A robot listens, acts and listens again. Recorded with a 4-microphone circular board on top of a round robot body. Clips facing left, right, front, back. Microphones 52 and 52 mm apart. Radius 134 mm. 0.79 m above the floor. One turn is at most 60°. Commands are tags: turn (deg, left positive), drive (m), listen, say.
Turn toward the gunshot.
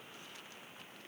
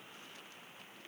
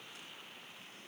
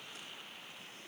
<listen/>
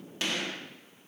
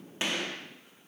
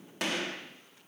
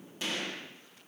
<turn deg="-25"/>
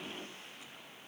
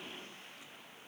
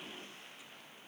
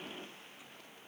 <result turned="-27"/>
<say>I heard a gunshot from this way, but can't make it out now.</say>